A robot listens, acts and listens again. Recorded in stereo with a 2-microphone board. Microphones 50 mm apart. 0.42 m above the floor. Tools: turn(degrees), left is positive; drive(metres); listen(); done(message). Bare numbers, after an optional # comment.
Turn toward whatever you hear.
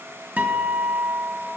# The guitar: about 35° right or 145° right.
turn(-35)
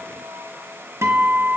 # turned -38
# So it is at 110° right.
turn(-110)
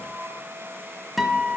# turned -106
done("Facing the guitar, under 1 m away.")